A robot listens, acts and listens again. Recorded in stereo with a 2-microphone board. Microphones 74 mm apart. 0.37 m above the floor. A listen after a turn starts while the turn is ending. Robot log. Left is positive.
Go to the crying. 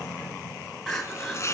cmd yaw +30
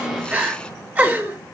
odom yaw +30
note: So it is at 25° right.
cmd yaw -25
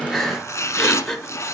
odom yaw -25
cmd fwd 1.0
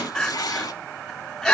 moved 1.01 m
note: The crying is now 10° left.
cmd yaw +10
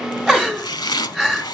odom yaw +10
cmd fwd 1.0
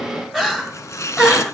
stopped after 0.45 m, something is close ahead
end: I am next to the crying.